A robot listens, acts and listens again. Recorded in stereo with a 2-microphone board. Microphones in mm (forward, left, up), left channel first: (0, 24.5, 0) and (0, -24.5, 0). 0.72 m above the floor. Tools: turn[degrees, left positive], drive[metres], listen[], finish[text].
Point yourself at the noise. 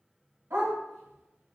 Action: turn[-90]
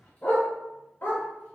Thought: So it is at 45° left.
Action: turn[45]
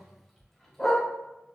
Thought: The dog barking is now 10° left.
Action: turn[10]
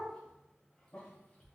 Action: listen[]
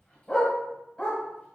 Thought: The dog barking is now 20° left.
Action: turn[20]
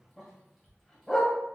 Action: finish[Facing the dog barking, 1 to 2 m away.]